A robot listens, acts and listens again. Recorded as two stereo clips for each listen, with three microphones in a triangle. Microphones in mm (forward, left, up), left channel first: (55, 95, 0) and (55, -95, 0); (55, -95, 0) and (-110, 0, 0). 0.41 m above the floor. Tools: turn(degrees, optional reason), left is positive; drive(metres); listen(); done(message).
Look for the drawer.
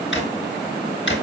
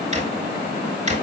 turn(degrees=100, reason="The drawer: 100° left.")
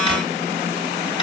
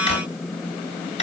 turn(degrees=25, reason="The drawer is now 25° left.")
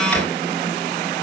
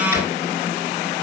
listen()
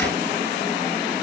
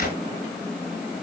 turn(degrees=10, reason="The drawer is now 10° left.")
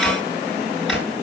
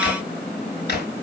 done("Facing the drawer, 2 to 4 m away.")